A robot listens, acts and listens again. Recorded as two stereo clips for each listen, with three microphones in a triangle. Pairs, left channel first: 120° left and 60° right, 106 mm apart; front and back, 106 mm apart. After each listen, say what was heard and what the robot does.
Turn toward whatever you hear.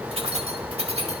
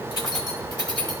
The keys jangling: 45° right. Turn 45° right.
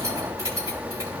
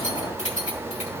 Found it: keys jangling, straight ahead, 2 to 4 m away.